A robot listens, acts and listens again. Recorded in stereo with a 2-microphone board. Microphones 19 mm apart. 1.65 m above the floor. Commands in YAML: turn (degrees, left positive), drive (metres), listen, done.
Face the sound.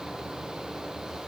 listen: true
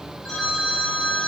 turn: 45
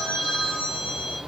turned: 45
turn: 85
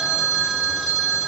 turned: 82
done: "Found it: a phone ringing, straight ahead."